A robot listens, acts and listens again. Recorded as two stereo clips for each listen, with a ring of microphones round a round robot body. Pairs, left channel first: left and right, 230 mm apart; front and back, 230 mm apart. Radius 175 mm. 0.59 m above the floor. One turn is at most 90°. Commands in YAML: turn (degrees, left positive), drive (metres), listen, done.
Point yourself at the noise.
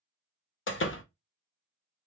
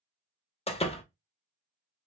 turn: 65
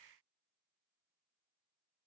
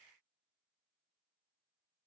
done: "Facing where the door slam came from. I can't hear it now."